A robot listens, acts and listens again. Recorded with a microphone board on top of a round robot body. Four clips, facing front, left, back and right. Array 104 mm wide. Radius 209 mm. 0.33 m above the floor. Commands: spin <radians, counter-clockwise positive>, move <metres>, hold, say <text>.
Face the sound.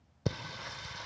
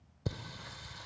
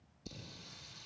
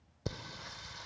say Found it: singing, straight ahead.